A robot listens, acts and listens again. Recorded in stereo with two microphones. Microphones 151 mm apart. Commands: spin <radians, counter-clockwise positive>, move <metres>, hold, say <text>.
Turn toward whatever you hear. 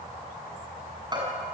spin -0.52
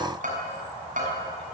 spin -2.09
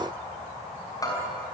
spin 0.44
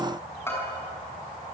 spin 0.26
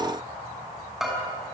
say Found it: a bell, straight ahead, over 4 m away.